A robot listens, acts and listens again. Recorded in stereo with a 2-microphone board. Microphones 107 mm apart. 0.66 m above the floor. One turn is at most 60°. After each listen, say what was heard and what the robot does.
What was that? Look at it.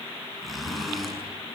Turn 30° left.
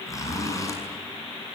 So it is at 150° left. Turn 60° left.
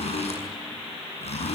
The zipper is now 105° left. Turn 60° left.
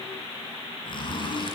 The zipper is now 50° left. Turn 50° left.
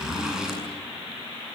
Found it: a zipper, straight ahead, over 4 m away.